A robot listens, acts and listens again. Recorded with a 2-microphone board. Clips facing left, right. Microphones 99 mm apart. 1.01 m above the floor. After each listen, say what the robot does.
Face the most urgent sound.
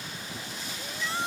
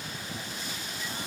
Turn 90° left.
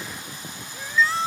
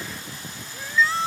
Found it: a shout, straight ahead.